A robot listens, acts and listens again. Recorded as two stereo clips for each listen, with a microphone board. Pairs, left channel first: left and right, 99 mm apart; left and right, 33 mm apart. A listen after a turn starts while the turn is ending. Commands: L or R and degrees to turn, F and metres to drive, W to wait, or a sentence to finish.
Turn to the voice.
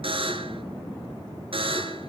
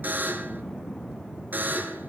W
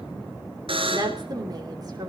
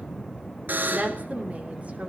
R40
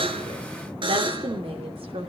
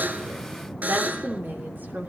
R100
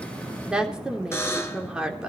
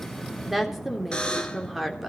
R10
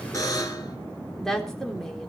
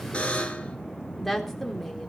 Facing the woman speaking.